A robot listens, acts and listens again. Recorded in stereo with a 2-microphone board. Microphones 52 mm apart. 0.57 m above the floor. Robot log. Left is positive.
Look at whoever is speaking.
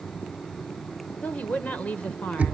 note: The woman speaking: about 25° left or 155° left.
cmd yaw +25
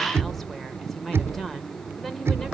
end: Found it: a woman speaking, straight ahead, 2 to 4 m away.